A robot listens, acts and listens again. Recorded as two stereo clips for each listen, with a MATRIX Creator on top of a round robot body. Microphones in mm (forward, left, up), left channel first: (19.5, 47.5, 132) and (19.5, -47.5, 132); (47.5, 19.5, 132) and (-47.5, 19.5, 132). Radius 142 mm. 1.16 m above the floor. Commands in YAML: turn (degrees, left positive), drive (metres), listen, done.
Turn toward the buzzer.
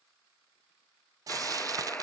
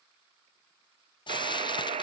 turn: 165
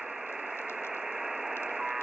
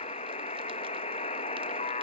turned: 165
done: "Found it: a buzzer, straight ahead, under 1 m away."